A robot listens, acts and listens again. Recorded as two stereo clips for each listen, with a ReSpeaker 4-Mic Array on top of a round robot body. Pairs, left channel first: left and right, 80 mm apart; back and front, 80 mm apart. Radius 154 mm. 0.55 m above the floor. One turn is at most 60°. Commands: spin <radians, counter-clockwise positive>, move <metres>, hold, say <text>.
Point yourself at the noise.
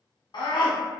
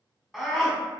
spin 1.05
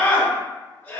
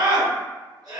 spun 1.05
spin 0.35
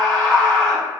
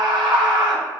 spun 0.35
say Facing the scream.